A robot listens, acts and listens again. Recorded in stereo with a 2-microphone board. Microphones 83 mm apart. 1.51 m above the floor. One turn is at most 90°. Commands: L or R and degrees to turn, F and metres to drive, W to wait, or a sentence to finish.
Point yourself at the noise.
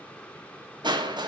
R60
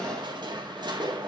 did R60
R60
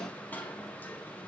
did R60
L20
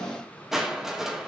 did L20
Found it: crushing, straight ahead.